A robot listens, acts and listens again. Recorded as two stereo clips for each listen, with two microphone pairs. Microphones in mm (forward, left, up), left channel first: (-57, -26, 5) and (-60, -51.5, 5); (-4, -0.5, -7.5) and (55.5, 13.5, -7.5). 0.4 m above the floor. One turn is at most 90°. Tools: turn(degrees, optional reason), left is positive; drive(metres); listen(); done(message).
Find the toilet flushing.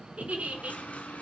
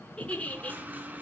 turn(degrees=75, reason="The toilet flushing: 75° left.")
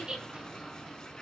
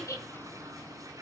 turn(degrees=25, reason="The toilet flushing is now 25° left.")
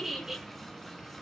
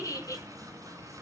listen()
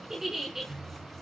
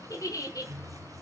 done("Facing the toilet flushing.")